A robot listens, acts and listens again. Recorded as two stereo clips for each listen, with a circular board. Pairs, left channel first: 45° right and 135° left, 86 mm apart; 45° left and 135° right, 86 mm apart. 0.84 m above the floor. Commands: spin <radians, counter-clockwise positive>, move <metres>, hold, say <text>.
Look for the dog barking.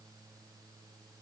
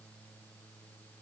hold
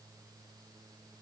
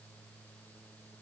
hold
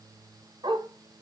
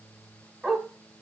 spin 2.44
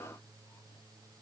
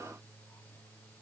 hold
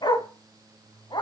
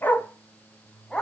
spin -0.61
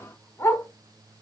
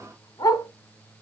spin 0.17
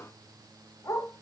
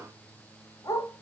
say Found it: a dog barking, straight ahead.